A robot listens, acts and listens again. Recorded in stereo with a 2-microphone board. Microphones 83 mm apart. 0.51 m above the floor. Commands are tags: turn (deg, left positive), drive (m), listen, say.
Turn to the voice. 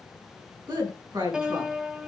<turn deg="-60"/>
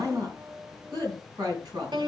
<turn deg="-60"/>
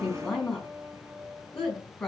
<turn deg="10"/>
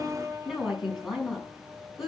<say>Found it: a woman speaking, straight ahead.</say>